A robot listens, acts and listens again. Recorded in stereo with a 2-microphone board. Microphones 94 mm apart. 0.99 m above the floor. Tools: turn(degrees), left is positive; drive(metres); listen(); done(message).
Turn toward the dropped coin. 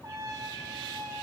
listen()
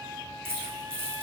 turn(degrees=-25)
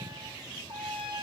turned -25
listen()
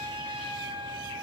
done("I heard a dropped coin, but can't make it out now. It was about straight ahead or 130° right.")